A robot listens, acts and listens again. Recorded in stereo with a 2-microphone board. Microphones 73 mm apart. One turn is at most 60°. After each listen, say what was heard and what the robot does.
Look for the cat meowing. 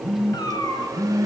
The cat meowing: about 65° left or 115° left. Turn 60° left.
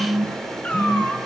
So it is at 20° left. Turn 20° left.
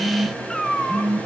The cat meowing is now 10° left. Turn 10° left.
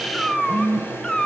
The cat meowing is now 10° left. Turn 10° left.
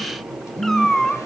The cat meowing is now 10° left. Turn 10° left.
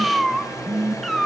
Found it: a cat meowing, straight ahead, 1 to 2 m away.